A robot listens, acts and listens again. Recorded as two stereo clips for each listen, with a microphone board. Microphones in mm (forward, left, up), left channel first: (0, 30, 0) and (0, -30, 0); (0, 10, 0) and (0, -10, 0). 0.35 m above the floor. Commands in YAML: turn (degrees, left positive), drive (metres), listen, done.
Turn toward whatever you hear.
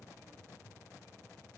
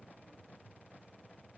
listen: true
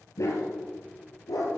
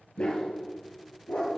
turn: 70
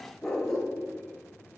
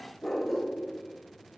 turn: 10
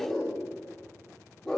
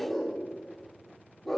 done: "Facing the dog barking."